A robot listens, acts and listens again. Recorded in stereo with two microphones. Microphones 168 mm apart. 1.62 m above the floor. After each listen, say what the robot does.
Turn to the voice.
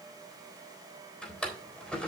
Keep listening.
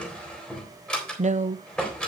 Turn 45° right.
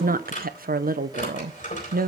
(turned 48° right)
Turn 80° right.
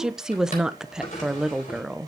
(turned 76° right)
Facing the woman speaking.